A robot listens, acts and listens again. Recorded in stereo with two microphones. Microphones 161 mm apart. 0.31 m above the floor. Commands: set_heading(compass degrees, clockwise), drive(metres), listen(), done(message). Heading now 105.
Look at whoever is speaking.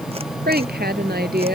set_heading(195)
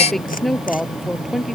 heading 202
done("Facing the woman speaking.")